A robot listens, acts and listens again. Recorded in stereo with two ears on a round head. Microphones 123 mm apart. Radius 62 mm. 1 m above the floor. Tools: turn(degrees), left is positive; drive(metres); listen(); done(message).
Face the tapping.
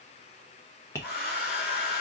turn(degrees=20)
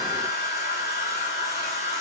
listen()
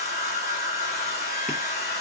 listen()
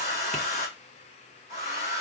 done("I heard tapping, but can't make it out now. It was about straight ahead or 140° left.")